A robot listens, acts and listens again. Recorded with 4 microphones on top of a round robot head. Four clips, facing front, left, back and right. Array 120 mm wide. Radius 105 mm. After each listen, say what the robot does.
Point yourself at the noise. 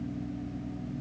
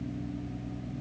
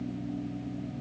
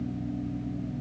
Keep listening.
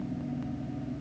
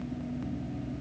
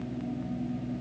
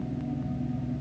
Keep listening.
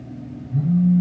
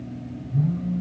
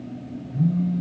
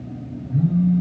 Turn 60° right.
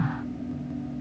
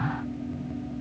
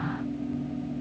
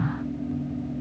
Keep listening.
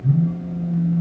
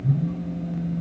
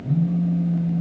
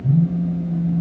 Turn 20° right.
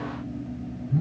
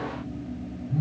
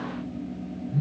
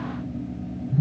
Facing the phone buzzing.